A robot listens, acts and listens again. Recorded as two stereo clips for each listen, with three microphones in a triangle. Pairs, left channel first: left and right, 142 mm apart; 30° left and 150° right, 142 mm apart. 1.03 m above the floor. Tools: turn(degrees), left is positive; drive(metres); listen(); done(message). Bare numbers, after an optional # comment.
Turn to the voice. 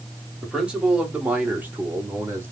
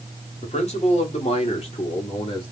# The man speaking: 15° right.
turn(-15)
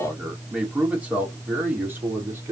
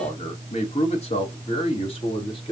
# The man speaking is now 20° right.
turn(-20)
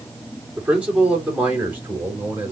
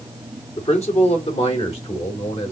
# The man speaking is now 15° right.
turn(-15)
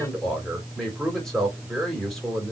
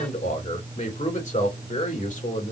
done("Facing the man speaking, 2 to 4 m away.")